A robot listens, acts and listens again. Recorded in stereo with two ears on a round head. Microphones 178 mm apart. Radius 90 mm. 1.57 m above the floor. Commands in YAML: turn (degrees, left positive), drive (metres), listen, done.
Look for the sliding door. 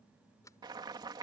turn: 15
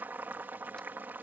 listen: true
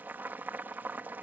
listen: true
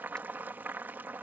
done: "I heard a sliding door, but can't make it out now. It was about straight ahead or 150° left."